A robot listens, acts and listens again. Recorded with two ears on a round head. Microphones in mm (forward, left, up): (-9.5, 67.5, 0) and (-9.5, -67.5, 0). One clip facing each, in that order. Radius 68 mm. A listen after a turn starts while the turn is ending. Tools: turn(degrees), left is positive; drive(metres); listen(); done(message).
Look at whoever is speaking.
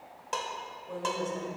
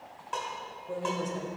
turn(degrees=-15)
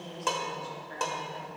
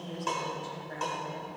turn(degrees=-150)
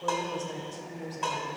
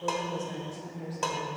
turn(degrees=30)
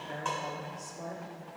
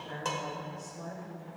turn(degrees=20)
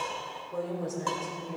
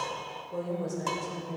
done("Facing the woman speaking.")